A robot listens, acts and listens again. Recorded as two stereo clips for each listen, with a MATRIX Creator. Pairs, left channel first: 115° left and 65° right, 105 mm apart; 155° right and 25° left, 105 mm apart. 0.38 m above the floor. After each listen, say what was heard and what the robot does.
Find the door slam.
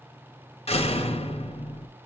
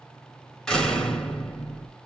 The door slam: 115° left. Turn 115° left.
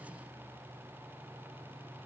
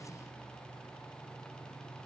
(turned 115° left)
I heard a door slam from this way, but can't make it out now.